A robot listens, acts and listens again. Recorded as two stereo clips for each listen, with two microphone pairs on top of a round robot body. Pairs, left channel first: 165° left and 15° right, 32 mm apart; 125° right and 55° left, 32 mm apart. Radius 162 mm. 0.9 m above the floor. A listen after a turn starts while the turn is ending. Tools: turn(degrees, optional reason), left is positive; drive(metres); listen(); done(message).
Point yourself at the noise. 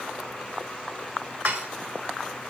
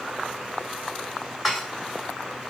turn(degrees=-30, reason="The dishes clattering: 30° right.")
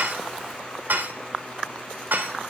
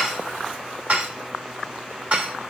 done("Facing the dishes clattering, 2 to 4 m away.")